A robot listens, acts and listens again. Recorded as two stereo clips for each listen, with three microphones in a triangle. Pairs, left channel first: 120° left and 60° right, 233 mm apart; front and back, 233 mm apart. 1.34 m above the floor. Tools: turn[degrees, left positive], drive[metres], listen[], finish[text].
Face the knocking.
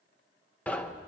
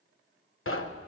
Thought: The knocking: 35° left.
Action: turn[35]
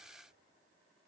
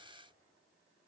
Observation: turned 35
Action: finish[Facing the knocking.]